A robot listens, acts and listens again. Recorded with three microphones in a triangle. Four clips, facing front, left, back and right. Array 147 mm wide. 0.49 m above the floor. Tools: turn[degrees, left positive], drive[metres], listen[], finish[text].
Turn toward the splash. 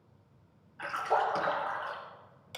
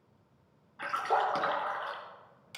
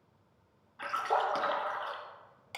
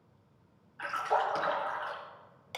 Thought: The splash: 125° left.
Action: turn[125]
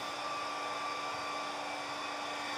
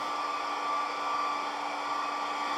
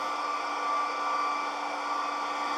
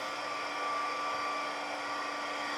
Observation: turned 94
Thought: Nothing new. It was at 30° left.
Action: turn[30]
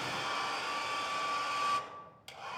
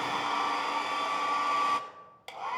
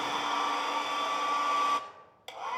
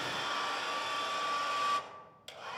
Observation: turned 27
Action: finish[Facing where the splash came from. I can't hear it now.]